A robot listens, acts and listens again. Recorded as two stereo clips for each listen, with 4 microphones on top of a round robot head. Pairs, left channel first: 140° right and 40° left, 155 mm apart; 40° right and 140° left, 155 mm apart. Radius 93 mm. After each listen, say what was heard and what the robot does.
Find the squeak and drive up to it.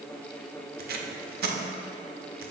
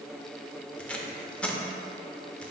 Keep listening.
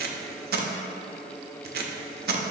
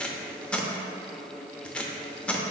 Keep listening.
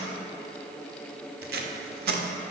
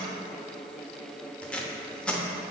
I can't make out a squeak, only tape being pulled.